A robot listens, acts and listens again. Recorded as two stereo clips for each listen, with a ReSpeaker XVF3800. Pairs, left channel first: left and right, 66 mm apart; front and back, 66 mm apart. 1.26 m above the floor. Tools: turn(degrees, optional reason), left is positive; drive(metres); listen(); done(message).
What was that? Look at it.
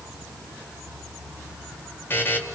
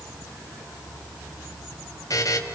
turn(degrees=35, reason="The buzzer: 35° left.")
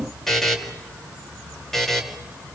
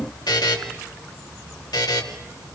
done("Facing the buzzer.")